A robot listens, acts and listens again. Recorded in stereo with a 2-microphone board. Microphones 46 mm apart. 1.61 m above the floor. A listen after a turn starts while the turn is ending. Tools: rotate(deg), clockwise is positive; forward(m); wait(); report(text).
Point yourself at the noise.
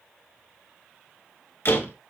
rotate(-55)
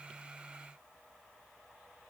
wait()
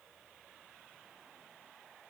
report("I heard a door slam, but can't make it out now. It was about straight ahead or 70° left.")